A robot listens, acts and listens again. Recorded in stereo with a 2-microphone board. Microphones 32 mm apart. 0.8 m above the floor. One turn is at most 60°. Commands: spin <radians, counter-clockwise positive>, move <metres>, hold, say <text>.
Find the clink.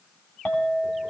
spin 1.05
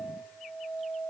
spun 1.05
spin 0.70
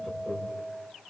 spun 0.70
say Facing the clink.